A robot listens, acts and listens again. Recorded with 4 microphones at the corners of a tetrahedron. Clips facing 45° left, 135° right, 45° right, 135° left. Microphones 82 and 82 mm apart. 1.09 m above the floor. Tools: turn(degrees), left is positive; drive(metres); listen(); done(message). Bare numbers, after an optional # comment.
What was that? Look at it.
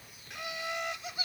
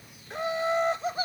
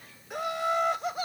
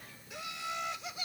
# The laughter: 85° right.
turn(-85)
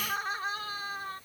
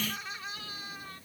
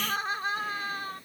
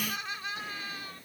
done("Facing the laughter.")